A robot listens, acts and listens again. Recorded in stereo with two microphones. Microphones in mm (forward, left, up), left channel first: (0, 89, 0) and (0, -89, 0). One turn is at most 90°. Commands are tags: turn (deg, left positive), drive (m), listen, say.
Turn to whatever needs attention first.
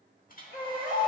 <turn deg="75"/>
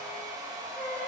<turn deg="15"/>
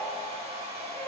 <listen/>
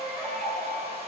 <say>Found it: a baby crying, straight ahead, 1 to 2 m away.</say>